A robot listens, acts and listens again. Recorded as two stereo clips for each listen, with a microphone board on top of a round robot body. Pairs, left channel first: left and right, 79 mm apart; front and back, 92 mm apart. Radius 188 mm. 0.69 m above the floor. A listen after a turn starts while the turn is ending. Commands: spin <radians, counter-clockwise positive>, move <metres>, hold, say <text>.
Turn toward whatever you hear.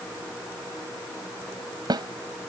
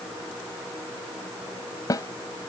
spin -0.96
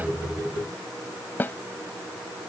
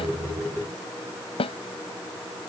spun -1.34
spin 0.44
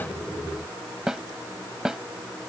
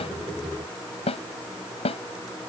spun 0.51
say Facing the snare drum.